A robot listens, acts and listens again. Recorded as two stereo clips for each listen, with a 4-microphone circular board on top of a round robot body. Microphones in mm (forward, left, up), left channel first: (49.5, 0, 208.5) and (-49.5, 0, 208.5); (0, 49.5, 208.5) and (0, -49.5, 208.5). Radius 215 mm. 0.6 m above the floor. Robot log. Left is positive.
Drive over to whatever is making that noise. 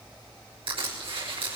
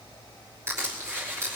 note: The crushing: 150° right.
cmd yaw -150
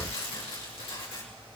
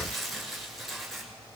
cmd fwd 1.0
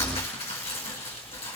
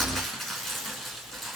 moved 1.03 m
cmd fwd 1.0
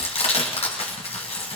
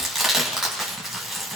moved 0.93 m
cmd fwd 1.0
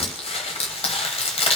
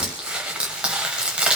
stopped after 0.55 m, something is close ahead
note: The crushing is now 10° right.
cmd yaw -10
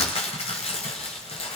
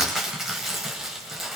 end: Arrived at the crushing, straight ahead.